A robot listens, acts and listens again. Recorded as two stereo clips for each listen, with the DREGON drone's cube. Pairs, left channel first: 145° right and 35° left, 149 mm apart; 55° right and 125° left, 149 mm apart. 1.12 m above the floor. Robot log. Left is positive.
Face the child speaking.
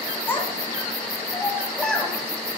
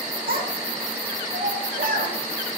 note: The child speaking: 125° left.
cmd yaw +125
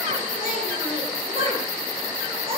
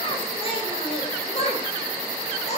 note: The child speaking is now 15° right.
cmd yaw -15
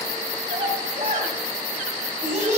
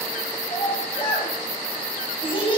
end: Found it: a child speaking, straight ahead.